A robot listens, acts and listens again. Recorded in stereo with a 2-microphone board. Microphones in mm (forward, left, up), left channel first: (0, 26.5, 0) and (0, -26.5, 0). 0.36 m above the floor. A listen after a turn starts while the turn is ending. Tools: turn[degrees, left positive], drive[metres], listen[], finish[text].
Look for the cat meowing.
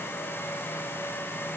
Action: listen[]
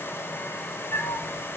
Thought: The cat meowing: about 60° left or 120° left.
Action: turn[60]
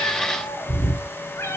Thought: So it is at 55° left.
Action: turn[55]
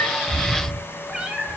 Thought: The cat meowing is now 10° right.
Action: turn[-10]
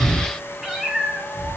Action: finish[Facing the cat meowing, 1 to 2 m away.]